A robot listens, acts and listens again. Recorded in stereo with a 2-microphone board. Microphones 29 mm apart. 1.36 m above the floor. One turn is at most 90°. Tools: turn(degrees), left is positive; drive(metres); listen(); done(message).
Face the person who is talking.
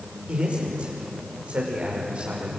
turn(degrees=-45)
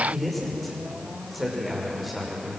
done("Facing the man speaking, over 4 m away.")